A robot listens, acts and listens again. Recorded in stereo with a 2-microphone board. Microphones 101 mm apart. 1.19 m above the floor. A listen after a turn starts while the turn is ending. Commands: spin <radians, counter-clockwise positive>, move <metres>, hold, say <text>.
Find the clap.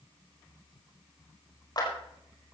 spin 0.79
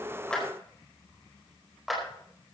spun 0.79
say Found it: a clap, straight ahead.